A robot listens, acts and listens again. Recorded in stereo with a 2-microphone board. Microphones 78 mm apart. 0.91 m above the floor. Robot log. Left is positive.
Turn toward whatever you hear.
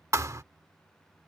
note: The thud: about 40° right or 140° right.
cmd yaw -40
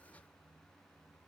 cmd idle
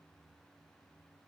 end: I heard a thud, but can't make it out now. It was about straight ahead or 100° right.